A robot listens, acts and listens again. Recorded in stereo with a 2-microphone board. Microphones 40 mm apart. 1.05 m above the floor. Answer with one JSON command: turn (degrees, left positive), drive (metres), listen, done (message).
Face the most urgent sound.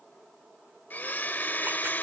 {"listen": true}
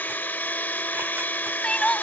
{"turn": 20}
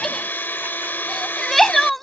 {"done": "Facing the crying."}